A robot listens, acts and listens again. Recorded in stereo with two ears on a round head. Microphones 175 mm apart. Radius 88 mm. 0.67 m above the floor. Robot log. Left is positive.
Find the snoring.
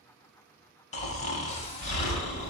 note: The snoring: about 35° left or 145° left.
cmd yaw +35
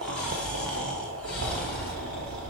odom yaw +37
end: Found it: snoring, straight ahead, under 1 m away.